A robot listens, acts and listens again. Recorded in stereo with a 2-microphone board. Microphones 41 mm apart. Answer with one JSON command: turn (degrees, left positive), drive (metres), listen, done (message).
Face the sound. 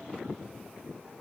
{"listen": true}
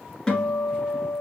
{"turn": 15}
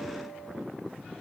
{"listen": true}
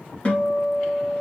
{"turn": 150}
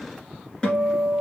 {"turn": 20}
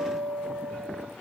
{"done": "Found it: a guitar, straight ahead."}